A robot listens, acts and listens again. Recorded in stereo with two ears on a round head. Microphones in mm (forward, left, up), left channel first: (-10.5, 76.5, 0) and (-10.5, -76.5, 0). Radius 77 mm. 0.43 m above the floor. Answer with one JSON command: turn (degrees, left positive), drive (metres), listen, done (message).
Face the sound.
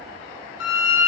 {"turn": 90}
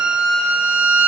{"done": "Found it: a violin, straight ahead."}